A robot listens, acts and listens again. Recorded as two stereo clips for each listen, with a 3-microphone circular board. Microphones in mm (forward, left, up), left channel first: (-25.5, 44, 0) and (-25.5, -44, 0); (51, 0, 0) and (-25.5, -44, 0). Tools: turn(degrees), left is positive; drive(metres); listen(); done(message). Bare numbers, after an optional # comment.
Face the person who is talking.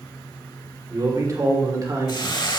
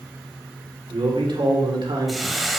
# The man speaking: 140° right.
turn(-140)
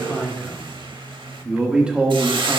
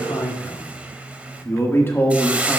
# The man speaking is now 30° right.
turn(-30)
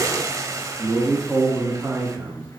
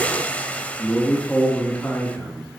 # The man speaking is now 40° right.
turn(-40)
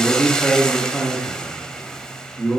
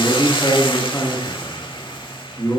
# The man speaking is now 10° left.
turn(10)
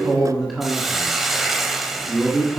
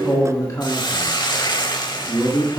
done("Found it: a man speaking, straight ahead.")